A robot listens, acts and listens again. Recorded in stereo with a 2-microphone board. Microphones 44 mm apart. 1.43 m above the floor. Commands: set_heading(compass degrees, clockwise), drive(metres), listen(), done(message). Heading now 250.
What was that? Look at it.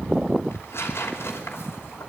set_heading(175)
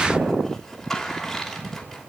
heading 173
done("Found it: tearing paper, straight ahead.")